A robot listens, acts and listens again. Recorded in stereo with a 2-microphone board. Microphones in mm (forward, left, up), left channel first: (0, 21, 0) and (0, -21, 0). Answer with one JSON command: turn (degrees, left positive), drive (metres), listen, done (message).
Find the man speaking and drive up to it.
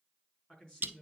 {"turn": 15}
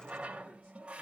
{"listen": true}
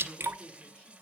{"turn": 145}
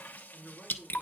{"turn": -10}
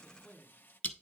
{"drive": 1.0}
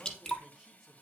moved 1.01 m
{"drive": 1.0}
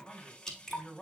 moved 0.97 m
{"drive": 1.0}
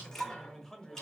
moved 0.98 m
{"turn": 10}
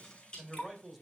{"drive": 1.0}
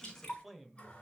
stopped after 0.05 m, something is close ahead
{"done": "Arrived at the man speaking, straight ahead."}